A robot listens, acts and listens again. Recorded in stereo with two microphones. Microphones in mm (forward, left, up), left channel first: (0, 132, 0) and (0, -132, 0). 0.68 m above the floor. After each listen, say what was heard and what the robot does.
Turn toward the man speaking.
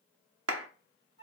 Keep listening.
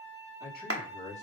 The man speaking: about 25° left or 155° left. Turn 25° left.
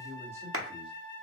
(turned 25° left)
So it is at 15° right. Turn 15° right.
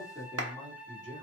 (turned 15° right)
The man speaking is now 30° right. Turn 30° right.
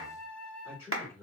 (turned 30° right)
The man speaking is now 15° right. Turn 15° right.
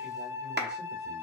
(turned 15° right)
Keep listening.
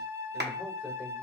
Keep listening.
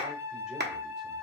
I heard a man speaking from this way, but can't make it out now.